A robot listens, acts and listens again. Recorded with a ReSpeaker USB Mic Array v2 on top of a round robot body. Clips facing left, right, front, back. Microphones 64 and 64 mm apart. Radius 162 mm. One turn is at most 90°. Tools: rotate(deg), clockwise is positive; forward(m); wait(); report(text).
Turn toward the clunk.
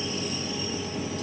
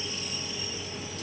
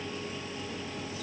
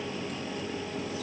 wait()
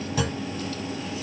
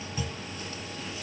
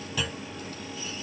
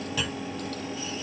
rotate(-90)
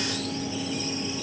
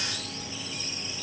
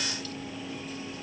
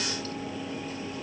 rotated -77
rotate(-10)
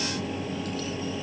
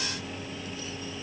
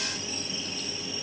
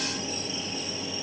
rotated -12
report("Facing where the clunk came from. I can't hear it now.")